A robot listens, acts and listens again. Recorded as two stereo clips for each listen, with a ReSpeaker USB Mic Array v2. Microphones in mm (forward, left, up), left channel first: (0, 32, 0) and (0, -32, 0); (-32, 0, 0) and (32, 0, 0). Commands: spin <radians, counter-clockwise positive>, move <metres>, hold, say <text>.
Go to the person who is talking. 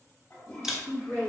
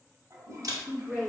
spin -1.83
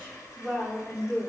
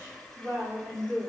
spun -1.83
spin -0.44
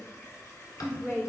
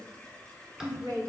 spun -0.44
spin -0.17
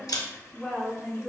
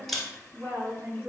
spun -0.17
move 1.0
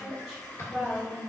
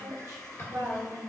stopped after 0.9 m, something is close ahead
say I am next to the woman speaking.